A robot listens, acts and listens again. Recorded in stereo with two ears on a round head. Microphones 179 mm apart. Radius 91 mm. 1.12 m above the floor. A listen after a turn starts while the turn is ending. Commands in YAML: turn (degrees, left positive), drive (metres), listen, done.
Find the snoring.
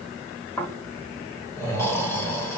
turn: 30
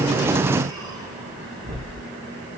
turn: -20
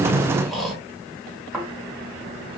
done: "Found it: snoring, straight ahead, 1 to 2 m away."